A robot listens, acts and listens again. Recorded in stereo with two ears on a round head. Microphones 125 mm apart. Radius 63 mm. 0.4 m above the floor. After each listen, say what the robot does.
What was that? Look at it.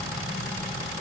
Keep listening.
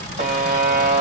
Turn 55° right.
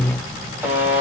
Turn 15° right.
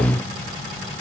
Keep listening.
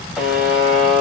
Found it: a buzzer, straight ahead.